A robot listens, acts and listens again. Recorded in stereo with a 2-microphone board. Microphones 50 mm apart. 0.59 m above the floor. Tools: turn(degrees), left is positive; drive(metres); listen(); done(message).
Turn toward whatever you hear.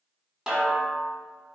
turn(degrees=-30)
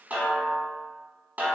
turn(degrees=-140)
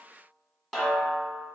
done("Facing the snare drum, 1 to 2 m away.")